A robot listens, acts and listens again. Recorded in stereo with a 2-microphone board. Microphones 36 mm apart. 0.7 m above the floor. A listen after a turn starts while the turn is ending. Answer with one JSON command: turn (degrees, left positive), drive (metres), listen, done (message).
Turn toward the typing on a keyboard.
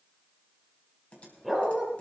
{"turn": 35}
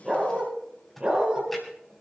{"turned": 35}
{"done": "Found it: typing on a keyboard, straight ahead."}